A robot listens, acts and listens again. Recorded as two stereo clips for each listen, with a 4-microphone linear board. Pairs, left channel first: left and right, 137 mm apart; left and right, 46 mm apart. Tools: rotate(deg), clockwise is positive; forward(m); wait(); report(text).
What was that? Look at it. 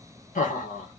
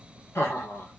rotate(-75)
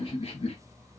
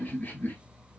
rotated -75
rotate(-50)
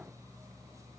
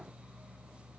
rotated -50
wait()
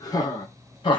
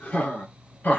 rotate(-35)
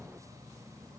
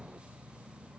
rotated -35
wait()
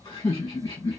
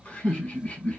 rotate(-30)
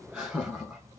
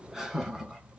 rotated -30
rotate(15)
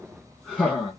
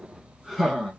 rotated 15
report("Found it: laughter, straight ahead, 1 to 2 m away.")